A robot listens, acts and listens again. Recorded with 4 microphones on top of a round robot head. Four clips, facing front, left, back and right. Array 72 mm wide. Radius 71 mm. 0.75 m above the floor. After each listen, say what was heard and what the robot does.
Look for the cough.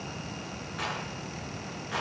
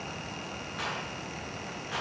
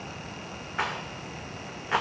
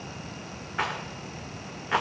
Keep listening.
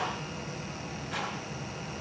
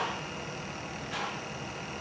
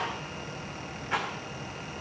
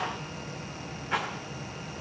Keep listening.
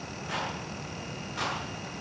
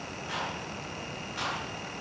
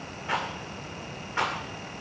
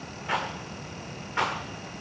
I can't make out a cough, only a rattle.